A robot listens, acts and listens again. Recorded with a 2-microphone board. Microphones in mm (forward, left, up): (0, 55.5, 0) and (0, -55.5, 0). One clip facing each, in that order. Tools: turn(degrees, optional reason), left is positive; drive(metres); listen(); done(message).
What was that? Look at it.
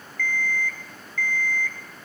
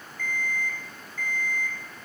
turn(degrees=-25, reason="The alarm clock: about 25° right or 155° right.")
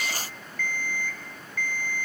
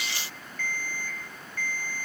turn(degrees=-135, reason="So it is at 135° right.")
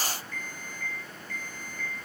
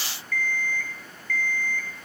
turn(degrees=30, reason="The alarm clock is now 30° left.")
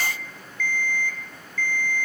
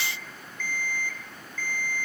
turn(degrees=-15, reason="The alarm clock is now 15° right.")
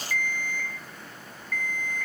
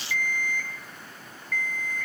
done("Found it: an alarm clock, straight ahead, 1 to 2 m away.")